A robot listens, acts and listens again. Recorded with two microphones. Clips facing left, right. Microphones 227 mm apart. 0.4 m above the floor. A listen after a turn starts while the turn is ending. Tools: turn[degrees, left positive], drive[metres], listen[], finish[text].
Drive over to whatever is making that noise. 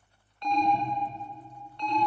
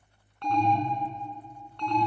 Thought: The alarm: about 65° right or 115° right.
Action: turn[-65]
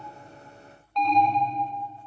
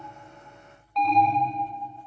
Action: drive[1.0]
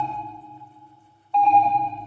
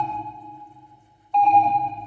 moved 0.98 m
Action: drive[1.0]
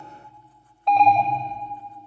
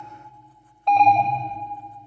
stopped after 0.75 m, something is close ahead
Action: finish[Arrived at the alarm, straight ahead.]